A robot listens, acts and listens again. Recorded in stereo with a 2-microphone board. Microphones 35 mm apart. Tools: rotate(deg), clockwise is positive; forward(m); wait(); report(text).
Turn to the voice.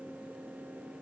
wait()
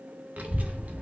rotate(45)
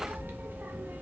rotate(85)
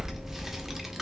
rotate(10)
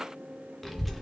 report("Found it: a child speaking, straight ahead, under 1 m away.")